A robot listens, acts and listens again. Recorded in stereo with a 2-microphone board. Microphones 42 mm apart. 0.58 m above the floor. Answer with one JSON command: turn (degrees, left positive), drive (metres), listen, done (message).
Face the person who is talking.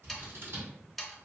{"listen": true}
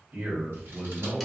{"turn": -40}
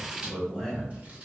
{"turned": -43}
{"done": "Found it: a man speaking, straight ahead, 2 to 4 m away."}